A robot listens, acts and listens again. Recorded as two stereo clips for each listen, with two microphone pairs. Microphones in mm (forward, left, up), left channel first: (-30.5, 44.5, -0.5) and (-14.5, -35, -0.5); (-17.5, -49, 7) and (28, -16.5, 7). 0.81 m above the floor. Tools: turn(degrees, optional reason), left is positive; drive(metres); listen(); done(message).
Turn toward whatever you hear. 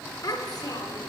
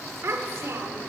turn(degrees=70, reason="The child speaking: 70° left.")
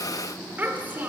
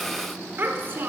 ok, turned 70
turn(degrees=-15, reason="The child speaking is now 15° right.")
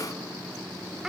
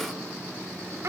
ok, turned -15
done("Found it: a child speaking, straight ahead, 1 to 2 m away.")